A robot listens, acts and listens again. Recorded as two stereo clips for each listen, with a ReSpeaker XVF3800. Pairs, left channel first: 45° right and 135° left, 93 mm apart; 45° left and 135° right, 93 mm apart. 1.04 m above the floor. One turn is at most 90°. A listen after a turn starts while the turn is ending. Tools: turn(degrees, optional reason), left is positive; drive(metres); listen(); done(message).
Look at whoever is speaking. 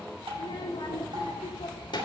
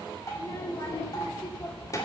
turn(degrees=-10, reason="The child speaking: 10° right.")
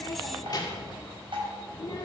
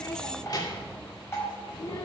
done("Found it: a child speaking, straight ahead, 2 to 4 m away.")